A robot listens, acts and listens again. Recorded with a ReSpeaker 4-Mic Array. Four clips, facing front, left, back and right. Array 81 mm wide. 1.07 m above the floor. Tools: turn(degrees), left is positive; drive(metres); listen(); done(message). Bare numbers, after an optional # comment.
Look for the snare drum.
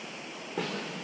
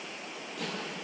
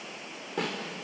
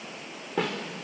# The snare drum: 100° right.
turn(-100)
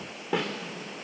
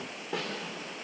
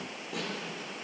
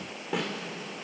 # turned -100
done("Facing the snare drum, 2 to 4 m away.")